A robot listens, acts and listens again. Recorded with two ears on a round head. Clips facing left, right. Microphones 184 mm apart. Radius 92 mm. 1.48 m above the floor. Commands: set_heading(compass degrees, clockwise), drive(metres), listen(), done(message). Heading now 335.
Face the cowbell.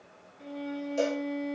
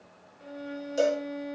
set_heading(350)
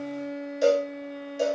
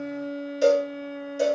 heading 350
done("Facing the cowbell.")